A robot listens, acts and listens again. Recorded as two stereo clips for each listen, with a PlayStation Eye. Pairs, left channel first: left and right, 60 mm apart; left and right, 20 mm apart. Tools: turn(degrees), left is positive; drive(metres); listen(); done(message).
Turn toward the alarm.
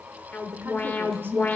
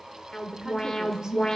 turn(degrees=30)
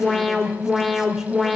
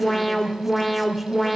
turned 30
done("Found it: an alarm, straight ahead, 1 to 2 m away.")